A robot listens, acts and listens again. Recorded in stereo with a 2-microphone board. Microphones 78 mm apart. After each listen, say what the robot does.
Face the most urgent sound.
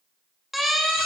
Turn 30° left.
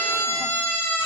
Turn 150° left.
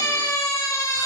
Turn 40° left.
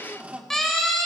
Found it: a siren, straight ahead, over 4 m away.